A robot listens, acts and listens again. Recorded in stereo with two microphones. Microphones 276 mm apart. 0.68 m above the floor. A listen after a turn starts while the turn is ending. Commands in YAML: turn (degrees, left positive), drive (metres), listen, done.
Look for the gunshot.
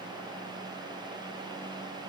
listen: true
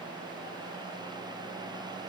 listen: true
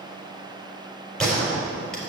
turn: 30
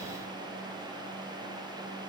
listen: true
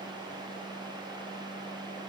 done: "I heard a gunshot, but can't make it out now. It was about 25° right or 145° left."